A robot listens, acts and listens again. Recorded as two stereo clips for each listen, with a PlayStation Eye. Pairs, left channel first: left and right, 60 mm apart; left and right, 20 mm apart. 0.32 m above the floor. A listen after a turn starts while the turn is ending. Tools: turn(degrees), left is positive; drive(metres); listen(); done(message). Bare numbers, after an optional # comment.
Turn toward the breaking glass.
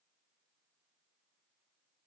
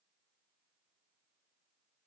listen()
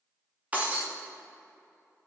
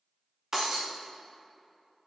# The breaking glass: about 25° right or 155° right.
turn(-25)
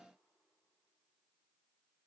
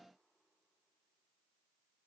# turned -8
listen()
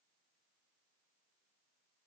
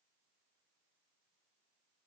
done("I heard breaking glass, but can't make it out now. It was about 15° right or 150° right.")